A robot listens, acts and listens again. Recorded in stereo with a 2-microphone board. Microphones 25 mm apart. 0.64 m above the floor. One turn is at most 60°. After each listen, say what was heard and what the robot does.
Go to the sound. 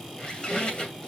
The squeak: about 35° left or 145° left. Turn 35° left.
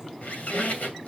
So it is at 110° left. Turn 60° left.
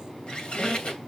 The squeak is now 45° left. Turn 45° left.
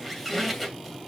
Drive 1.0 m forward.
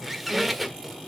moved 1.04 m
Drive 1.0 m forward.
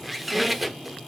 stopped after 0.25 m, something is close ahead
Arrived at the squeak, straight ahead.